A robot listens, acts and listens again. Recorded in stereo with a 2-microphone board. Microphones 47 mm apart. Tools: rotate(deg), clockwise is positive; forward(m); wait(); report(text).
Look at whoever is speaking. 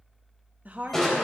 rotate(35)
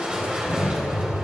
wait()
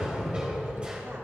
wait()
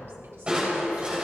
report("I heard a woman speaking, but can't make it out now. It was about straight ahead or 110° right.")